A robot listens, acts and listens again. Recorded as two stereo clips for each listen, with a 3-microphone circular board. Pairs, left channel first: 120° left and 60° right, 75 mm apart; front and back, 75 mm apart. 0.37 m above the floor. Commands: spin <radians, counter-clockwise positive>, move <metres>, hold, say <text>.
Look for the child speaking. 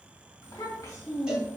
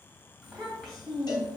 spin 1.40
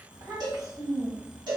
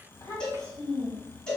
spin -0.70
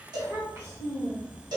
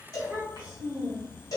spin -0.26
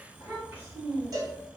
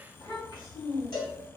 say Facing the child speaking, 2 to 4 m away.